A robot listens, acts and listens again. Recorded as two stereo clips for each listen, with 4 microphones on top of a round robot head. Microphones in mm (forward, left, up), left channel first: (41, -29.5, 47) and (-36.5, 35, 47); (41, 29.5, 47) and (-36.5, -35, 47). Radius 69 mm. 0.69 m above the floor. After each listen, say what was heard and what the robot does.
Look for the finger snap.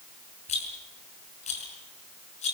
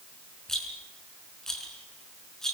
Keep listening.
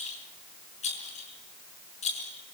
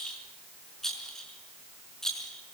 Keep listening.
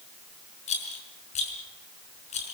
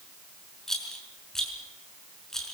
I can't make out a finger snap to turn to.